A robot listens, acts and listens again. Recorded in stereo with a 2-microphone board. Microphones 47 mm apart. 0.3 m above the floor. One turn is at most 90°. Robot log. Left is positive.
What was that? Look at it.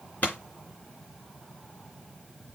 note: The pop: about 40° left or 140° left.
cmd yaw +40
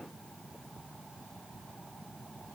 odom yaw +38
cmd idle
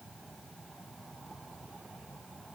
end: I heard a pop, but can't make it out now. It was about straight ahead or 105° left.